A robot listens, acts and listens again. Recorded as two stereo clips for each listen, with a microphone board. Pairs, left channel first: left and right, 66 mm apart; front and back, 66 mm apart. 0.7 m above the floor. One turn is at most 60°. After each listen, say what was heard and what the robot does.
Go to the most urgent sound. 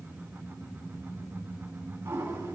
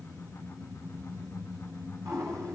Keep listening.
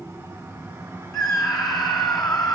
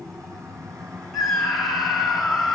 The scream: 90° left. Turn 60° left.
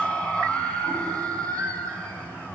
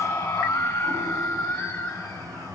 The scream is now 20° left. Turn 20° left.
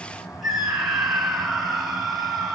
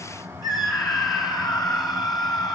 Drive 1.0 m forward.
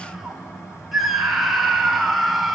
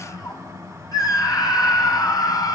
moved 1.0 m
Drive 1.0 m forward.
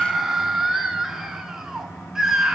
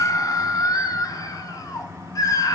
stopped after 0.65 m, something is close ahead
The scream is now 10° right. Turn 10° right.
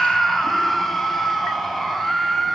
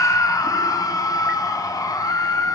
Arrived at the scream, straight ahead.